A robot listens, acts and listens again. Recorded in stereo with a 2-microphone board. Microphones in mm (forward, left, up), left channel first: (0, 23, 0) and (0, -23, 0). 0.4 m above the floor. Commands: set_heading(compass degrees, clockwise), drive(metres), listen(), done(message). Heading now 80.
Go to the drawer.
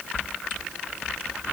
listen()
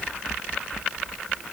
listen()
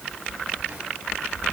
done("I can't make out a drawer to turn to.")